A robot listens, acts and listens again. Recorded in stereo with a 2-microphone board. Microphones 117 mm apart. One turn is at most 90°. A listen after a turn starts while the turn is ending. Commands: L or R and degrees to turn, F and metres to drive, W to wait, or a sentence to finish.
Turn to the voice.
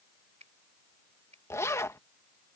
W
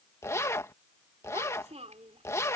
R70
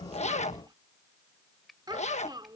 R40
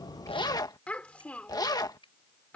L10
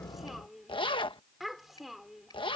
Facing the child speaking.